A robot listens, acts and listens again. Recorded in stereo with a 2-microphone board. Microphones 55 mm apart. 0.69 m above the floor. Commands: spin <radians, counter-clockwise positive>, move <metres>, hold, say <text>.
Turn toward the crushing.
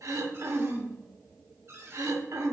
hold
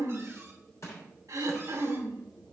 spin 0.96
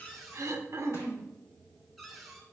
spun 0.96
hold
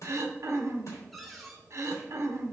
spin 1.13
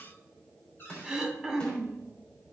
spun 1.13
spin 0.35
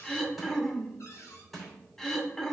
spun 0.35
say Facing the crushing.